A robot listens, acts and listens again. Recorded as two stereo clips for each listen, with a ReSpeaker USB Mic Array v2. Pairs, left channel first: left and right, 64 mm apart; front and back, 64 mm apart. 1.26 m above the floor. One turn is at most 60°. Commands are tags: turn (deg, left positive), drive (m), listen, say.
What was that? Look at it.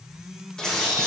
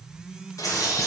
<turn deg="10"/>
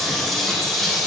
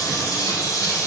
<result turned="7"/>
<say>Found it: a bird, straight ahead, 1 to 2 m away.</say>